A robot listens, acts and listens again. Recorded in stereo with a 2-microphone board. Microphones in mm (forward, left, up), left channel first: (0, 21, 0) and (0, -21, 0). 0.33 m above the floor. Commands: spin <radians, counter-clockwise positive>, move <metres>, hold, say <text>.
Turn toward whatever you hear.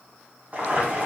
spin -0.70
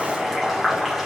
say Facing the boiling, 1 to 2 m away.